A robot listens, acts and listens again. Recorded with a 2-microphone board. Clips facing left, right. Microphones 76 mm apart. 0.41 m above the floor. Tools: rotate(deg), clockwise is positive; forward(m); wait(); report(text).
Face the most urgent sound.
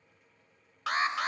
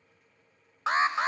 rotate(25)
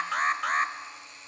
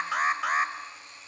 report("Found it: an alarm, straight ahead, 1 to 2 m away.")